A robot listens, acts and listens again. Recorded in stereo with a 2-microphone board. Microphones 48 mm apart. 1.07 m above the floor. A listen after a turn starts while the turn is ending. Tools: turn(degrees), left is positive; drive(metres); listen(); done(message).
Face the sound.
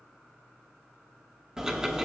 turn(degrees=-30)
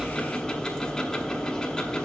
turn(degrees=15)
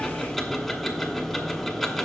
done("Found it: ticking, straight ahead, 1 to 2 m away.")